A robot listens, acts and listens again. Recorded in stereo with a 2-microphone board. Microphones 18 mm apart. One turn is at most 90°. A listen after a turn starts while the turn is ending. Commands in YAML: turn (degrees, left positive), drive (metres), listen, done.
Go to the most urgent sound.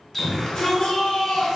turn: 50
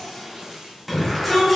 drive: 1.0
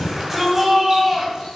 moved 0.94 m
turn: -10
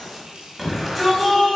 drive: 1.0
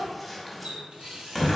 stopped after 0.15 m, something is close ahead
done: "Arrived at the shout, straight ahead."